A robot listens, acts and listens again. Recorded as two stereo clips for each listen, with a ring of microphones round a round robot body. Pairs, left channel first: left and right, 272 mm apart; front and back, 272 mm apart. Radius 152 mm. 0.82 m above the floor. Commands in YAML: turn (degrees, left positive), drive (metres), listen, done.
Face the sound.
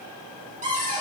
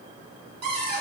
turn: -155
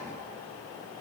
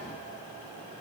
listen: true
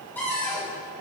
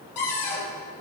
done: "Found it: a cupboard door, straight ahead, over 4 m away."